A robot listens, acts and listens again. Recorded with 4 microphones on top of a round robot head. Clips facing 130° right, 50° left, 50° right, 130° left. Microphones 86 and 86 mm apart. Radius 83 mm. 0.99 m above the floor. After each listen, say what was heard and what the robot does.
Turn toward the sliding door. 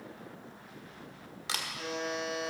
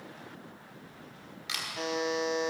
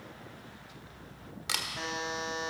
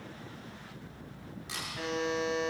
Keep listening.
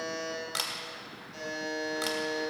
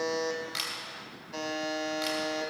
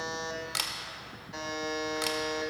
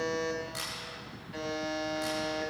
Keep listening.
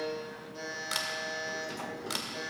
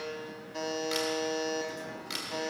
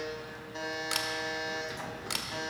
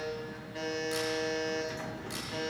I can't make out a sliding door to turn to.